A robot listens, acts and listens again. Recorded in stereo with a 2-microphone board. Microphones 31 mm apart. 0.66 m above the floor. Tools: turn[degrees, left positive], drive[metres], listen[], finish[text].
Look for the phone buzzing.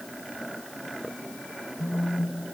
Thought: The phone buzzing: about 60° left or 120° left.
Action: turn[60]
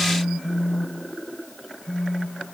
Thought: So it is at 30° left.
Action: turn[30]
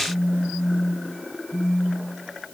Action: finish[Found it: a phone buzzing, straight ahead.]